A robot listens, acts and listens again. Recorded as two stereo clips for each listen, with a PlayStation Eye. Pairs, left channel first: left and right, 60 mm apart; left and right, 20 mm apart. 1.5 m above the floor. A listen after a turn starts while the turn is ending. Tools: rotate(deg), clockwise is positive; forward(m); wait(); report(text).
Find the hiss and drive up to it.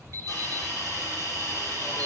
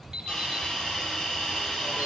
rotate(-60)
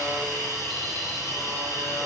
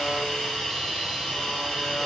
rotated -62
rotate(-60)
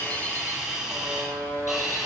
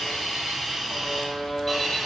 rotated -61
forward(1.0)
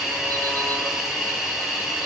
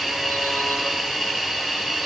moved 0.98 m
forward(1.0)
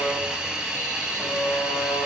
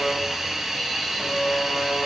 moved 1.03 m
rotate(10)
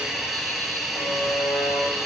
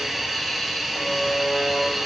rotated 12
forward(1.0)
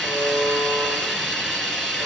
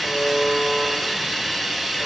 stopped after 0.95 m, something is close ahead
rotate(-10)
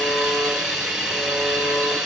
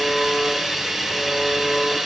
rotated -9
report("Arrived at the hiss, straight ahead.")